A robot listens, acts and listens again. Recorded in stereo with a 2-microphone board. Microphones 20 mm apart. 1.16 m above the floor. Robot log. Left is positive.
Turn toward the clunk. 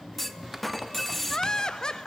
cmd yaw +30
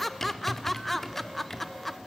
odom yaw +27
cmd idle
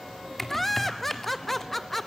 end: I heard a clunk, but can't make it out now. It was about 15° right or 140° left.